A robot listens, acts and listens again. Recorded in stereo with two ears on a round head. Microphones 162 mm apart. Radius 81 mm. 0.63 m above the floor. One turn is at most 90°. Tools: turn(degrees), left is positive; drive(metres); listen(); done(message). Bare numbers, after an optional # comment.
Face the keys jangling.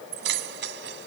# The keys jangling: about 70° right or 110° right.
turn(-70)
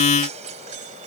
# So it is at 40° right.
turn(-40)
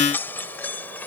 # The keys jangling is now 10° left.
turn(10)
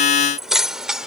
done("Facing the keys jangling.")